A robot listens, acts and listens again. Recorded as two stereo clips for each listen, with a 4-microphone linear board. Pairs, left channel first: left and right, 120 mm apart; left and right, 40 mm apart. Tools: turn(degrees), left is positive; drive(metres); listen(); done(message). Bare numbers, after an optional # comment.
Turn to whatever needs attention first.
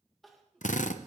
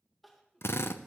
turn(30)
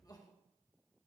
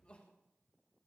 # So it is at 150° left.
turn(150)
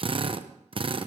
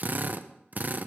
listen()
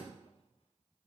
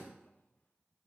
listen()
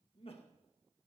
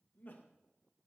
# The crying is now 45° left.
turn(45)
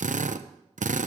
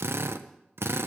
listen()
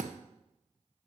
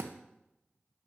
listen()
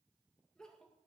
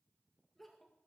done("Found it: crying, straight ahead.")